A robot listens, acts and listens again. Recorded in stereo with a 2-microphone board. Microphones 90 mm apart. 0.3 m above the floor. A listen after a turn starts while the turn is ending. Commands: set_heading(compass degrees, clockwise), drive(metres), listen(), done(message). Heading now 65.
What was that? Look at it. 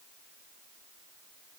listen()
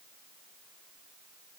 listen()
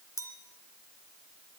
set_heading(30)
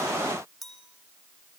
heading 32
done("Facing the clink.")